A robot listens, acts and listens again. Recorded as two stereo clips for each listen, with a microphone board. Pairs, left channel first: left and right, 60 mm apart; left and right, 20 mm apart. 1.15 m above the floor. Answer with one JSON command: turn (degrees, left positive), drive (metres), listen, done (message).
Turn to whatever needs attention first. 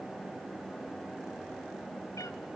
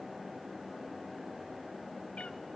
{"listen": true}
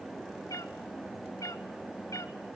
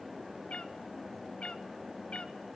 {"listen": true}
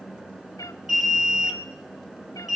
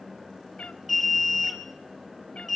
{"turn": -30}
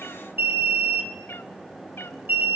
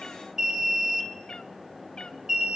{"turn": -140}
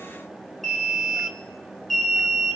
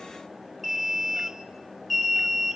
{"done": "Facing the alarm."}